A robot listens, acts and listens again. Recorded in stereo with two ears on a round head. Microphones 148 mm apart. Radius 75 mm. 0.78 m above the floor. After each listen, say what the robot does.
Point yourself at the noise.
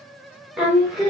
Turn 30° right.
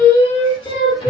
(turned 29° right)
Turn 30° left.
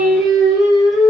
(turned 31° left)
Found it: singing, straight ahead, 1 to 2 m away.